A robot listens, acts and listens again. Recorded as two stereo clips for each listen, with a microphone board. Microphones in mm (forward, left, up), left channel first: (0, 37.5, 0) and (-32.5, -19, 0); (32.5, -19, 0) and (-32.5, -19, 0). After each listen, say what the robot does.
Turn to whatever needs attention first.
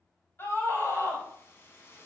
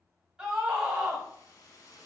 Turn 105° left.
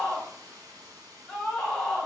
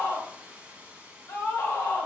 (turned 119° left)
Turn 15° right.
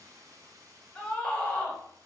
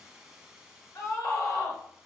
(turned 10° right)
Found it: a scream, straight ahead, 1 to 2 m away.